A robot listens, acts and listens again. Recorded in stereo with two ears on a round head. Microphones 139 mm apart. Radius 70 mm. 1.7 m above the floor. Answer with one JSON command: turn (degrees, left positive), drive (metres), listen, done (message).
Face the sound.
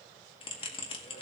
{"turn": 35}
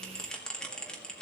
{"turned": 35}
{"done": "Facing the bell."}